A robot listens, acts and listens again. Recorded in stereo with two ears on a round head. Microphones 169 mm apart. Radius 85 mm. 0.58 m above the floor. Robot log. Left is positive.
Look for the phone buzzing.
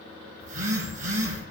note: The phone buzzing: about 45° right or 135° right.
cmd yaw -45
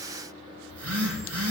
note: So it is at 90° right.
cmd yaw -90
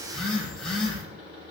end: Found it: a phone buzzing, straight ahead.